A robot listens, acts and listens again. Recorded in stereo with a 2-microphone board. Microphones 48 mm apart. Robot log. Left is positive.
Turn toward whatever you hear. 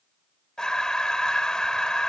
cmd yaw +30
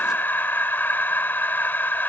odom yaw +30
note: So it is at 135° left.
cmd yaw +135
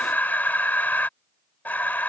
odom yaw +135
note: The breathing is now 40° left.
cmd yaw +40
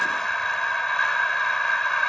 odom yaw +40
note: The breathing is now 10° left.
cmd yaw +10
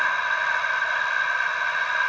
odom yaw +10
end: Facing the breathing.